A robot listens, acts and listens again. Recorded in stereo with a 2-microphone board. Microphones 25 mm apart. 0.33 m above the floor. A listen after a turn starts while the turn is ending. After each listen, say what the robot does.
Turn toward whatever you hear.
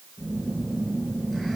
Turn 30° left.
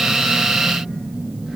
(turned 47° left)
Turn 35° right.
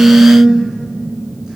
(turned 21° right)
Turn 15° right.
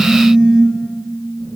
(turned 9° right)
Facing the phone buzzing, 2 to 4 m away.